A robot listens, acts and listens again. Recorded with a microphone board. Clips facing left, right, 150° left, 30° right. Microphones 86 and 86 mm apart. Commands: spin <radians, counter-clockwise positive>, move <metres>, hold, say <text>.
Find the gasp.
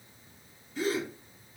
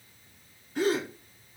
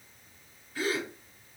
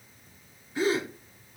spin -1.66
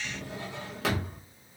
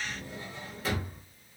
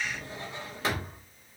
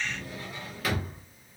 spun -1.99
spin 0.26
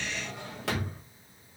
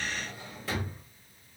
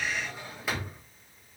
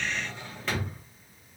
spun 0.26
say Facing where the gasp came from. I can't hear it now.